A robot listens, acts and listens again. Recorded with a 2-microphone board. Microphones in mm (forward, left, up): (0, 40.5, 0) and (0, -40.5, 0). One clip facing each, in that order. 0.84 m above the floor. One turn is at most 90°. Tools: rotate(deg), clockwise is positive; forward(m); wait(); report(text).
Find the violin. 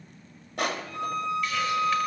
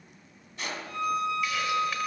rotate(65)
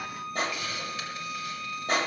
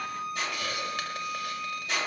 report("Facing the violin.")